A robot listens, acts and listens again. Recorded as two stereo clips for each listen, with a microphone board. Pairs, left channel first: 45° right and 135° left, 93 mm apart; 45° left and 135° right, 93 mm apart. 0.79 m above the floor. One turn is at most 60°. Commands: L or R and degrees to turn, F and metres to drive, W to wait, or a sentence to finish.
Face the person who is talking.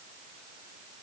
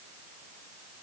W
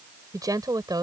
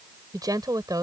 L60
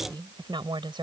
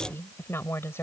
L60
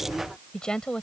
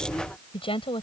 L35
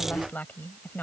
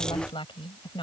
L25
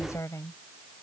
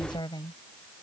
L10
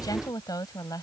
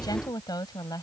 Found it: a woman speaking, straight ahead.